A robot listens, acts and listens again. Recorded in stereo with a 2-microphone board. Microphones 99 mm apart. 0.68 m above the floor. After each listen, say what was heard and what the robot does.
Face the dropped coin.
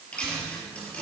Turn 30° left.
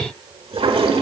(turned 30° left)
Keep listening.
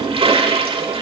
I heard a dropped coin, but can't make it out now. It was about 20° right or 140° left.